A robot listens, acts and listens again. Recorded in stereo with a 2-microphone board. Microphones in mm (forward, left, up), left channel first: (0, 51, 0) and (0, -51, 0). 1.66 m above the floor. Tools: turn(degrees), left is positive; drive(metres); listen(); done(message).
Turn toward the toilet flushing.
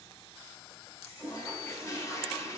turn(degrees=25)
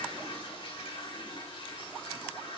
turn(degrees=130)
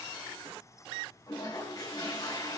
turn(degrees=40)
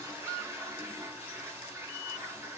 turn(degrees=-20)
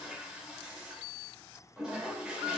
done("Facing the toilet flushing, 2 to 4 m away.")